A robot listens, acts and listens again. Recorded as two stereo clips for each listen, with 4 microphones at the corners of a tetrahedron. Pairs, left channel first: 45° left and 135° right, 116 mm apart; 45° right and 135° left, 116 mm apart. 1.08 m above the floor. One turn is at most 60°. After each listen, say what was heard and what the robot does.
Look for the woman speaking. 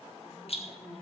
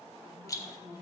The woman speaking: 65° left. Turn 60° left.
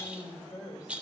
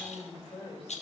The woman speaking is now 15° right. Turn 15° right.
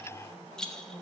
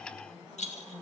Facing the woman speaking, over 4 m away.